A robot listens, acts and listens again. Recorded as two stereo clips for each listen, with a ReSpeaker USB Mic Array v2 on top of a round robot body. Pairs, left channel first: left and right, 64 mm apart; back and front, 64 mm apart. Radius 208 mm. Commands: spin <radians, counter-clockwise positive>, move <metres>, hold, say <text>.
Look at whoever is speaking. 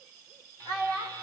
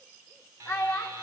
spin -2.18
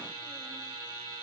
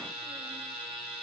hold
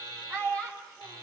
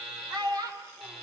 spin 0.35
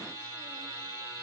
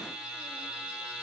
hold
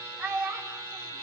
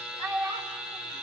say Facing the child speaking.